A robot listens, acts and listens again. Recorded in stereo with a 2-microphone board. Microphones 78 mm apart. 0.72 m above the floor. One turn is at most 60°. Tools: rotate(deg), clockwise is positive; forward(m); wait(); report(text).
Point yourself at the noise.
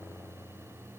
wait()
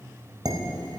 rotate(55)
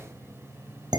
rotate(60)
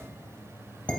rotate(-15)
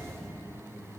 wait()
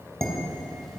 report("Found it: dishes clattering, straight ahead.")